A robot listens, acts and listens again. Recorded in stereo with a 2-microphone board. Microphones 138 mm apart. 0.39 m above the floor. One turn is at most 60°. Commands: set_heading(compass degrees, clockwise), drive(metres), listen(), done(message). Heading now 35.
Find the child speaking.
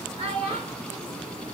set_heading(80)
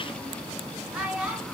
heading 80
done("Facing the child speaking, 2 to 4 m away.")